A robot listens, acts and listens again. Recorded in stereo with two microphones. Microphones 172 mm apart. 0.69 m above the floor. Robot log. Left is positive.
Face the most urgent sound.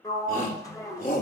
note: The shout: about 50° left or 130° left.
cmd yaw +50
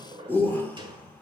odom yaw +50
note: So it is at 10° left.
cmd yaw +10
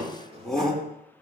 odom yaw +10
end: Found it: a shout, straight ahead, 2 to 4 m away.